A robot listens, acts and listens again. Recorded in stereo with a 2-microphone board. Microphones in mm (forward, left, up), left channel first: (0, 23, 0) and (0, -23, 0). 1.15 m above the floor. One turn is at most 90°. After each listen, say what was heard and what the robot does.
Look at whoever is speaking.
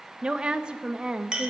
The woman speaking: about 20° right or 160° right. Turn 20° right.
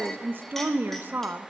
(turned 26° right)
So it is at 135° right. Turn 90° right.
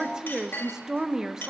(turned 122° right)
The woman speaking is now 15° right. Turn 15° right.
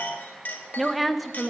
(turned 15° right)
Found it: a woman speaking, straight ahead.